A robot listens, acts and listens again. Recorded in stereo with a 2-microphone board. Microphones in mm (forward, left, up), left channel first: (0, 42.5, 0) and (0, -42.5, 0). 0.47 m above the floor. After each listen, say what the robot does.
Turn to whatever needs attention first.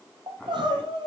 Turn 75° right.
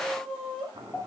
Facing the crying.